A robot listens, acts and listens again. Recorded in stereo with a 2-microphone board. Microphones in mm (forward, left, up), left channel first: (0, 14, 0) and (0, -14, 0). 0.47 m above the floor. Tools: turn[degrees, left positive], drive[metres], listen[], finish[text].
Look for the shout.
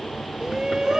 Thought: The shout: about 25° right or 155° right.
Action: turn[-25]
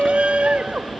Thought: So it is at 130° right.
Action: turn[-130]
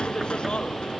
Thought: The shout is now 40° left.
Action: turn[40]
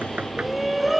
Action: finish[Found it: a shout, straight ahead.]